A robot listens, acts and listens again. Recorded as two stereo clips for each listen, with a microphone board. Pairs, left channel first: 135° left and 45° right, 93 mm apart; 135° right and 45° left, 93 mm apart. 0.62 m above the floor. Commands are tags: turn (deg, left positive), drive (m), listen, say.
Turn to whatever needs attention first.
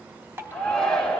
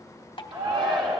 <turn deg="55"/>
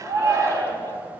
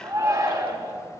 <say>Found it: a shout, straight ahead.</say>